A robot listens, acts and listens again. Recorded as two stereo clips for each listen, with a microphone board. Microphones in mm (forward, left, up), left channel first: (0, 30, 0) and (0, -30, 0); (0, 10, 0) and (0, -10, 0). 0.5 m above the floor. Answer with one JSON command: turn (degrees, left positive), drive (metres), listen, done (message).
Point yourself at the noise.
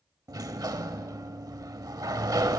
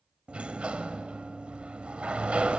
{"turn": -90}
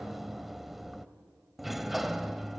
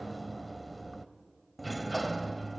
{"done": "Facing the sliding door, under 1 m away."}